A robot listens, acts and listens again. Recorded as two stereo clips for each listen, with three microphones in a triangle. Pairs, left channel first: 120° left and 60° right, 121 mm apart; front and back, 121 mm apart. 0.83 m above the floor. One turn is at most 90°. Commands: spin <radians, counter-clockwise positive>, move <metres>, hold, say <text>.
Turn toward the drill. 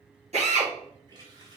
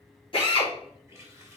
spin -0.70
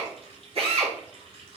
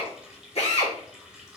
spin -0.44
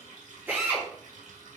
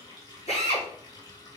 spin 0.26
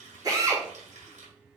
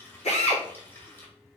say Facing the drill, 2 to 4 m away.